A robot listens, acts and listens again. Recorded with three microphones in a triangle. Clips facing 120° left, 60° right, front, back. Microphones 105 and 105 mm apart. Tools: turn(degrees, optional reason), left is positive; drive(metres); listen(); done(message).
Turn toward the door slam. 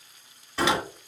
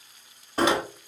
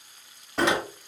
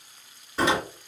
turn(degrees=-15, reason="The door slam: 15° right.")
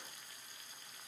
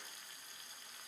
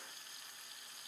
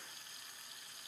done("I heard a door slam from this way, but can't make it out now.")